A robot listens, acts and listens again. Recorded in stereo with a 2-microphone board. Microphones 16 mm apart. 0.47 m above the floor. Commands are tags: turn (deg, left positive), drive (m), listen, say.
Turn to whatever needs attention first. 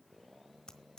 <listen/>
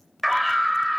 <turn deg="-30"/>
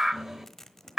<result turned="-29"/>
<turn deg="-145"/>
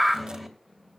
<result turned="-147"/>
<say>Found it: a scream, straight ahead.</say>